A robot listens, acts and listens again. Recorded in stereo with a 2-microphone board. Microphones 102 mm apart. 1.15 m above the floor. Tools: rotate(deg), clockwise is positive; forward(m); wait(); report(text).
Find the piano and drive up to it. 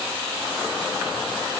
wait()
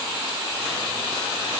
wait()
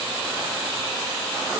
report("I can't make out a piano to turn to.")